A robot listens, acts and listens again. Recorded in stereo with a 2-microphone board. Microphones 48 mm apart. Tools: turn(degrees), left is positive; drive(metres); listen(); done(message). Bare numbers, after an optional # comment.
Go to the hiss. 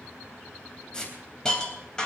# The hiss: about 15° left or 165° left.
turn(15)
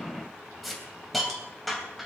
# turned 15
drive(1.0)
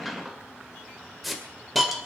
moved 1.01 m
drive(1.0)
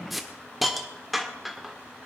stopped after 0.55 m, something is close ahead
done("I am next to the hiss.")